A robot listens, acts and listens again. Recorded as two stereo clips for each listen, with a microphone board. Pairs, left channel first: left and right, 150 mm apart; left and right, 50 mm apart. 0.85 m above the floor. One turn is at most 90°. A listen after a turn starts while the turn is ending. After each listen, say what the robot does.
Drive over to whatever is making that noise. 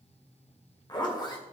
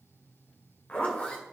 Turn 30° left.
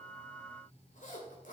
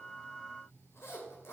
Turn 90° left.
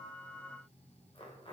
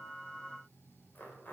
Turn 35° left.
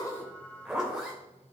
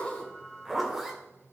Drive 1.0 m forward.
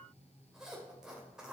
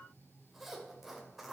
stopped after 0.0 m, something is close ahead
Something is in my way. I am facing the zipper but have not reached it.